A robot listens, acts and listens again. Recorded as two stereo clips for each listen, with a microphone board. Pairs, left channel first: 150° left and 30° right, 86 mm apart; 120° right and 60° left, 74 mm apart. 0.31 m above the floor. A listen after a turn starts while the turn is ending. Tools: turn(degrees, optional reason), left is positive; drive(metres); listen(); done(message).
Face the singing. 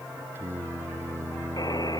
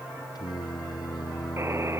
turn(degrees=-90, reason="The singing: 90° right.")
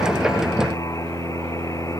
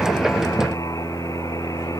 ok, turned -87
turn(degrees=10, reason="The singing is now 10° left.")
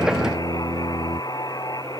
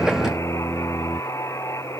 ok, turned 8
turn(degrees=15, reason="The singing is now 15° left.")
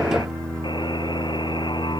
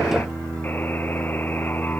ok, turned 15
turn(degrees=20, reason="The singing is now 20° left.")
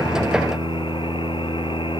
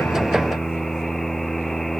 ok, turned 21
done("Facing the singing.")